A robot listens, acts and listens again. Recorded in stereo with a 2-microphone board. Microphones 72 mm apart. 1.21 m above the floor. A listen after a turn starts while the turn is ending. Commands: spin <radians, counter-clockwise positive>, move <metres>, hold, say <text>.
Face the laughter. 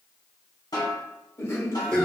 spin 0.79
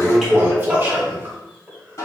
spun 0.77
say Facing the laughter, 1 to 2 m away.